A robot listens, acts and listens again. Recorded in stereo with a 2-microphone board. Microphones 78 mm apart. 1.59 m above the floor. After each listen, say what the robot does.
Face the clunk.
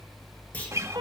Turn 20° left.
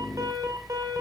Keep listening.
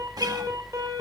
I heard a clunk, but can't make it out now. It was about straight ahead or 140° left.